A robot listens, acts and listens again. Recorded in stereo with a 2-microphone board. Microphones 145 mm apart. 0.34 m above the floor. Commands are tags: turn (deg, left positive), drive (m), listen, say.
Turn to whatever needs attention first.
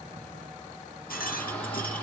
<turn deg="30"/>
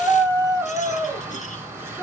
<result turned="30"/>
<turn deg="-15"/>
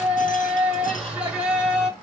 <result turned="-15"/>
<turn deg="-10"/>
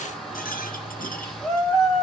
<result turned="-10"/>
<say>Found it: a shout, straight ahead.</say>